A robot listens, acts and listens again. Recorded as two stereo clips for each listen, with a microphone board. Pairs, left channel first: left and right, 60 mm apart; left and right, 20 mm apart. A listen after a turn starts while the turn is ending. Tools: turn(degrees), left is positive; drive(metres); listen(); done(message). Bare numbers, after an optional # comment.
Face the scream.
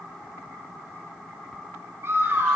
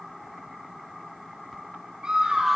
# The scream: about 45° right or 135° right.
turn(-45)
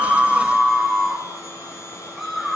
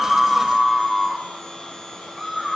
done("Facing the scream.")